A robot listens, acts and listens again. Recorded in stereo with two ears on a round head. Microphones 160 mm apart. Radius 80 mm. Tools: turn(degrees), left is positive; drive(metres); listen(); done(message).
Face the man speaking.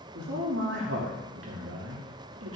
turn(degrees=-90)
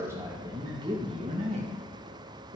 turn(degrees=-55)
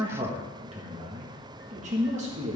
turn(degrees=-40)
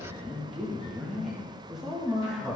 done("Found it: a man speaking, straight ahead.")